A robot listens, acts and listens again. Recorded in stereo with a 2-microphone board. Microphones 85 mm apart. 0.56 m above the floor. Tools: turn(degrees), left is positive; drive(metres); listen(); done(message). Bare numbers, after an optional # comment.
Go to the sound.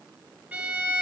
turn(-30)
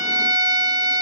# So it is at 140° right.
turn(-140)
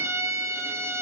# The violin is now 40° right.
turn(-40)
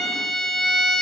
drive(1.0)
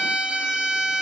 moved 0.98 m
# The violin is now 10° right.
turn(-10)
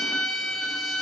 drive(1.0)
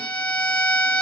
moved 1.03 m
# The violin is now 15° left.
turn(15)
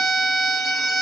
drive(1.0)
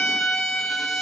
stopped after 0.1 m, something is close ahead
done("I am next to the violin.")